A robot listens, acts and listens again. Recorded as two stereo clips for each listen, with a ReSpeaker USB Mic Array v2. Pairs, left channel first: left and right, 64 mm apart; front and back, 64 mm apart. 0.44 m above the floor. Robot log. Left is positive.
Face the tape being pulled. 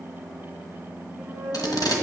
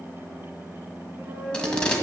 note: The tape being pulled: 75° left.
cmd yaw +75
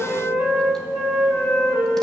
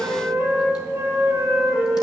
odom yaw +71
cmd idle
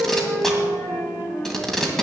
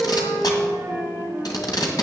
end: Found it: tape being pulled, straight ahead, 1 to 2 m away.